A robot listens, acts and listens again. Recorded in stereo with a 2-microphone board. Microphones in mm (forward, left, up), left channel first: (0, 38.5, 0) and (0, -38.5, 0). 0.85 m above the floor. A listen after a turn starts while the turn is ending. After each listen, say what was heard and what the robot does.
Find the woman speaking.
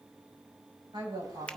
Turn 90° right.
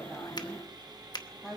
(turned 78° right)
Found it: a woman speaking, straight ahead, over 4 m away.